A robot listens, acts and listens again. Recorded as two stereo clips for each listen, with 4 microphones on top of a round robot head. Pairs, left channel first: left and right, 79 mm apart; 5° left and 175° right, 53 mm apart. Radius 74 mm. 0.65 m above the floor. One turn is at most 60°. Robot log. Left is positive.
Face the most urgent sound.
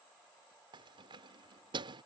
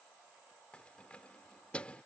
cmd idle
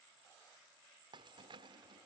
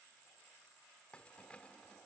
cmd idle
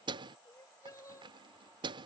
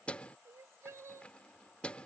note: The crying: 150° left.
cmd yaw +60
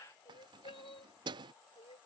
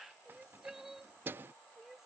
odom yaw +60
note: The crying is now 100° left.
cmd yaw +60
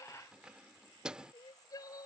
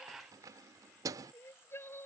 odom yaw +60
note: The crying is now 50° left.
cmd yaw +50
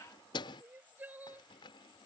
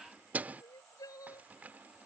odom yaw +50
note: The crying is now 20° right.
cmd yaw -20
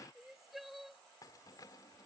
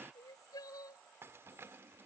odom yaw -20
end: Facing the crying.